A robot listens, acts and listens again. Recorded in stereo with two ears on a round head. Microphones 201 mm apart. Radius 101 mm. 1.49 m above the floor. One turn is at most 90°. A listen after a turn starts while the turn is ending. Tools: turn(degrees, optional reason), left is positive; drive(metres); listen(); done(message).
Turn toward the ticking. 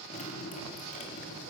listen()
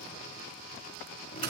listen()
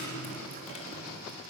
done("I can't make out ticking, only dripping and frying.")